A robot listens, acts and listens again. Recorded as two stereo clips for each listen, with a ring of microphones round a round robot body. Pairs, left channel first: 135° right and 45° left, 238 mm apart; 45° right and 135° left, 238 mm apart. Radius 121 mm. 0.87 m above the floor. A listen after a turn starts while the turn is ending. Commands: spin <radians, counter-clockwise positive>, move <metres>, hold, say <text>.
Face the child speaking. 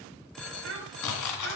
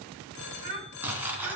spin 1.66
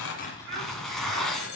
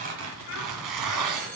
say Facing the child speaking, 2 to 4 m away.